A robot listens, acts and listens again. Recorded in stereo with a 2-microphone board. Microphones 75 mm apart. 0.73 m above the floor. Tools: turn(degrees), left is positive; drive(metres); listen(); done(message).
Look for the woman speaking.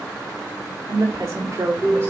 turn(degrees=-35)
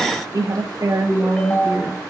turn(degrees=-40)
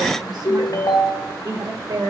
turn(degrees=-115)
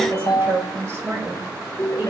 turn(degrees=-30)
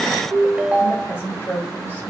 turn(degrees=25)
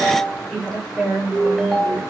turn(degrees=10)
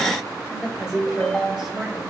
done("Facing the woman speaking.")